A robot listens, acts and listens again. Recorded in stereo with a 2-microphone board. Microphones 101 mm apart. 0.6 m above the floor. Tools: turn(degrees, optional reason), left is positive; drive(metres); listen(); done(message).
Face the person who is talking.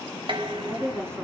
turn(degrees=-25, reason="The woman speaking: about 25° right or 155° right.")
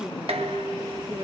turn(degrees=-125, reason="So it is at 125° right.")
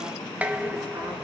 listen()
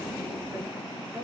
listen()
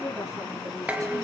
turn(degrees=-35, reason="The woman speaking is now 35° right.")
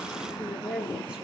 turn(degrees=-10, reason="The woman speaking is now 10° right.")
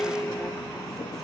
listen()
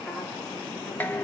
listen()
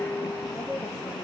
done("Facing the woman speaking.")